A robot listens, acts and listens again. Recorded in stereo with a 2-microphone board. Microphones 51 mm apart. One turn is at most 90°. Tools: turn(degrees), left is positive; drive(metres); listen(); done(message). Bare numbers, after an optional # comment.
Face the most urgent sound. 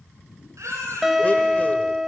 # The baby crying: about 75° right or 105° right.
turn(-75)
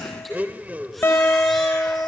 listen()
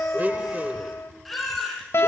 done("Facing the baby crying.")